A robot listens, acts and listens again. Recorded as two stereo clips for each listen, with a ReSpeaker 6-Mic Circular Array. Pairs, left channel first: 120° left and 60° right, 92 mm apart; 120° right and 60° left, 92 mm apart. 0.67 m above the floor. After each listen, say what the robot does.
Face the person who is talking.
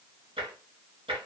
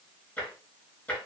Keep listening.
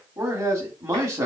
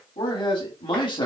Turn 110° right.
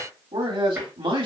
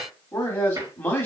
Turn 55° right.
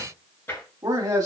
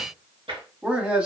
Turn 10° right.
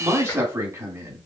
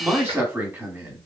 Facing the man speaking, 1 to 2 m away.